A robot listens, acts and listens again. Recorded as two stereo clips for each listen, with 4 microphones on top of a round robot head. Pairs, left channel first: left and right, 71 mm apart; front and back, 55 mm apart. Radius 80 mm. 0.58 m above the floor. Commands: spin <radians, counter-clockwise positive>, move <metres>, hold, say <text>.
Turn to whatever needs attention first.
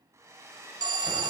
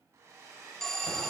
spin -1.48
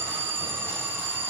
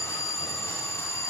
spin -0.52
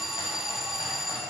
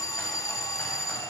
say Found it: an alarm, straight ahead, under 1 m away.